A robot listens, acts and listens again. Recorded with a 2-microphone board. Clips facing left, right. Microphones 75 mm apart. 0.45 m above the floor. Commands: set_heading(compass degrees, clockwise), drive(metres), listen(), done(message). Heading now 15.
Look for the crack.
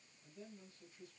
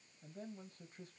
listen()
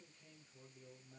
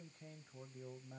listen()
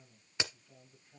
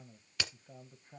set_heading(355)
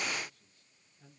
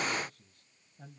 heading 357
listen()
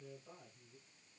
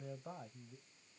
done("I heard a crack, but can't make it out now. It was about 5° left or 140° left.")